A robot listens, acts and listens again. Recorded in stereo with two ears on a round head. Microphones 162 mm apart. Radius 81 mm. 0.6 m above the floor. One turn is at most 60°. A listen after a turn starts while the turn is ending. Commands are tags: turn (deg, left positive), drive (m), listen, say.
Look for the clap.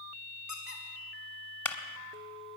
<turn deg="30"/>
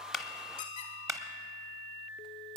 <turn deg="-20"/>
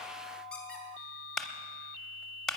<say>Found it: a clap, straight ahead.</say>